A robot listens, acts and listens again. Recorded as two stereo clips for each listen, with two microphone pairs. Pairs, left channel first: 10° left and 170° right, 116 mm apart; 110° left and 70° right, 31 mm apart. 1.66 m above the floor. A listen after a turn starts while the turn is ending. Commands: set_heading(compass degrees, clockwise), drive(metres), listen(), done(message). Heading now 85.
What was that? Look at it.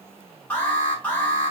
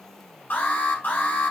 set_heading(355)
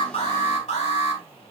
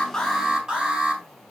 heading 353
done("Facing the alarm.")